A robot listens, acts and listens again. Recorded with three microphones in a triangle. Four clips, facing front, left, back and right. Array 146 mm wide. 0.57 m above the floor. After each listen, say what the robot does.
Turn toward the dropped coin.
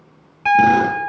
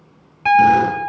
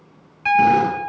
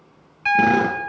Keep listening.
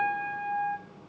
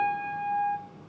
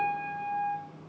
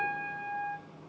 Keep listening.
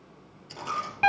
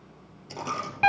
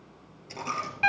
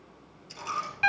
Turn 95° left.
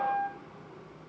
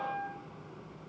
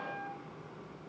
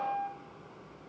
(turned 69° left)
Turn 25° left.
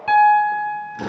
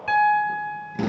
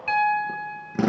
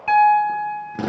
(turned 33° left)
I heard a dropped coin from this way, but can't make it out now.